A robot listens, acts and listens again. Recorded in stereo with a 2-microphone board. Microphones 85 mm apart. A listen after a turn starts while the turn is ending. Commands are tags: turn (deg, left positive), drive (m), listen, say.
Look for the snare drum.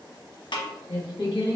<turn deg="65"/>
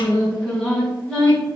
<listen/>
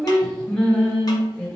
<listen/>
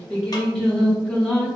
<say>I heard a snare drum, but can't make it out now. It was about straight ahead or 50° left.</say>